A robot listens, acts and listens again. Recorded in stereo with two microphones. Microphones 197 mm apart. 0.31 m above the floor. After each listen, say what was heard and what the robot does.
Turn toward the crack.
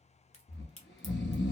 The crack: about 40° left or 140° left. Turn 40° left.
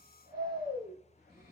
Keep listening.
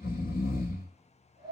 I heard a crack, but can't make it out now. It was about straight ahead or 100° left.